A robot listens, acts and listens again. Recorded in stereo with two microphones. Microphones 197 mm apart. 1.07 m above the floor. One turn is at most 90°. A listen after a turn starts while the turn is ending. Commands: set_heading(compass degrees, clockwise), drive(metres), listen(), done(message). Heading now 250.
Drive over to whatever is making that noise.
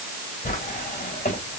set_heading(195)
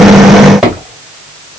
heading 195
drive(1.0)
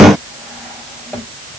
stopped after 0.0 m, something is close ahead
listen()
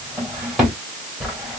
done("Something is in my way. I am facing the drawer but have not reached it.")